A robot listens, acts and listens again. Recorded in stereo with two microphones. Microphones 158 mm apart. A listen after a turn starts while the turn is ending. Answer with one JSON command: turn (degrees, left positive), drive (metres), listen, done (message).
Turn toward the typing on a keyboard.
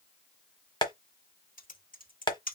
{"turn": 75}
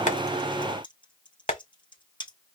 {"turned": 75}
{"turn": 35}
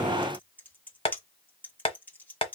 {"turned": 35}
{"turn": 10}
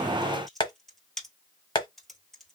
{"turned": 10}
{"done": "Facing the typing on a keyboard."}